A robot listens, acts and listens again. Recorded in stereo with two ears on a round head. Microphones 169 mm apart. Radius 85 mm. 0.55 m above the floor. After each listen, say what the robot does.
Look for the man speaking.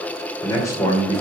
Turn 20° left.
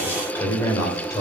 Turn 20° left.
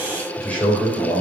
Turn 30° left.
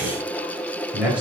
Facing the man speaking.